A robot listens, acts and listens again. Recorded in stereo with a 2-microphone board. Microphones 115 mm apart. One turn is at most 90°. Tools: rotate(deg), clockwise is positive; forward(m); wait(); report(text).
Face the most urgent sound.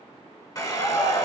rotate(-55)
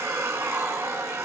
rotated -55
wait()
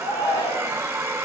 rotate(-60)
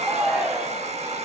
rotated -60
rotate(10)
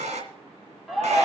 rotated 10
report("Found it: a shout, straight ahead.")